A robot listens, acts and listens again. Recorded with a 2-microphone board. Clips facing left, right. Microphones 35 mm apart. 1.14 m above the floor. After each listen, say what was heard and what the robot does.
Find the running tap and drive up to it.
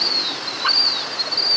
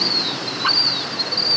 Keep listening.
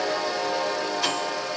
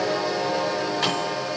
Keep listening.
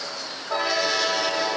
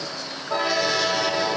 I can't make out a running tap to turn to.